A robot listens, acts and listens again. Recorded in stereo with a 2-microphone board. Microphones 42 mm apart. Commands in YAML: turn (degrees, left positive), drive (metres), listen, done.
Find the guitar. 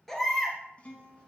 turn: 35
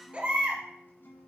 turn: 110
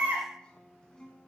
turn: 20
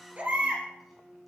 done: "Found it: a guitar, straight ahead, 1 to 2 m away."